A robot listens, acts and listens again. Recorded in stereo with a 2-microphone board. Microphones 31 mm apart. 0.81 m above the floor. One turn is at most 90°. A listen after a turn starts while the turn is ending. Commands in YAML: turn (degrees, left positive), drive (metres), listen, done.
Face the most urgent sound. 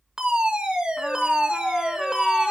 turn: -30
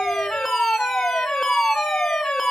done: "Facing the fire alarm."